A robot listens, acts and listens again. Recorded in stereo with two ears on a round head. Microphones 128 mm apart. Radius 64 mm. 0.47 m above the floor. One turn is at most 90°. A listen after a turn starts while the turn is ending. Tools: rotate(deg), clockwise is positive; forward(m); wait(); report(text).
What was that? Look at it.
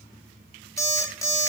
rotate(-25)
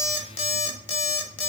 rotate(-90)
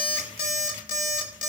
rotate(-55)
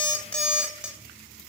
report("Found it: an alarm clock, straight ahead, 1 to 2 m away.")